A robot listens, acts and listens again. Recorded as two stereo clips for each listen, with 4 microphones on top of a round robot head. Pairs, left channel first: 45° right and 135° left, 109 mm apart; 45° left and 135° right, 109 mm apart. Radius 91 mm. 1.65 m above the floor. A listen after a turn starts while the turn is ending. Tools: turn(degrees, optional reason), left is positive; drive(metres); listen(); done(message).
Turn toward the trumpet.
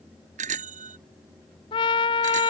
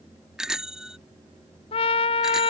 done("Found it: a trumpet, straight ahead.")